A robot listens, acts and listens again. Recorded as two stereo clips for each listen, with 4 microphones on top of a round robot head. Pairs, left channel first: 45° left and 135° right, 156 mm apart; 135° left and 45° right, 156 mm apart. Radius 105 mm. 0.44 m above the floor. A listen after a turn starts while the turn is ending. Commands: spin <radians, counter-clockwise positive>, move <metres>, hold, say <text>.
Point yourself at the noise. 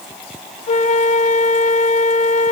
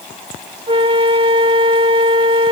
spin 0.17
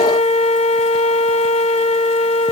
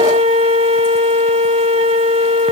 say Found it: a flute, straight ahead.